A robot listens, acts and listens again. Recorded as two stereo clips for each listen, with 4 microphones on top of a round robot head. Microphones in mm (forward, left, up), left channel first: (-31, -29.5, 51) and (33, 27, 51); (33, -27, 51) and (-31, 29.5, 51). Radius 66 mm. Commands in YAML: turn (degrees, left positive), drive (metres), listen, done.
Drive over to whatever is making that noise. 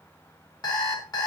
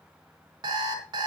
turn: 180
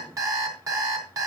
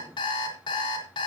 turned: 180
drive: 1.0
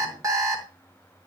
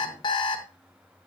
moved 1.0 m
turn: -10
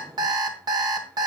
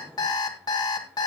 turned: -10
drive: 1.0
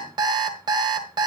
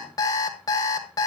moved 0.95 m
drive: 1.0
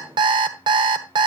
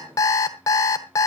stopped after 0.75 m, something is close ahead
turn: 10
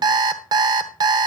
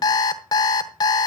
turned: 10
done: "I am next to the alarm clock."